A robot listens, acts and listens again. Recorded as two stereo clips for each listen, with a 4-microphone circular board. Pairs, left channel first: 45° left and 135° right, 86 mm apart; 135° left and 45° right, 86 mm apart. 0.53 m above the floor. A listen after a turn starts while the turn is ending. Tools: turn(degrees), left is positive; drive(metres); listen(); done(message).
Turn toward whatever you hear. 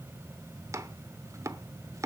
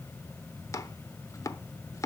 turn(degrees=180)
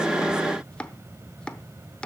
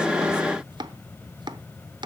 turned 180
turn(degrees=-35)
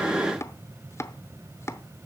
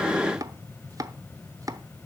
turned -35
done("Facing the chopping.")